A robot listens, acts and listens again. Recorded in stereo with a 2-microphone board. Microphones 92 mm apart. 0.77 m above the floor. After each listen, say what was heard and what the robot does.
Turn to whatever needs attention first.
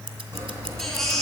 Turn 30° left.
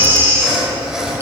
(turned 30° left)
So it is at 25° right. Turn 25° right.
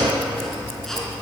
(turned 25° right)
Keep listening.
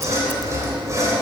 Keep listening.
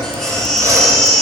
Found it: a baby crying, straight ahead, 2 to 4 m away.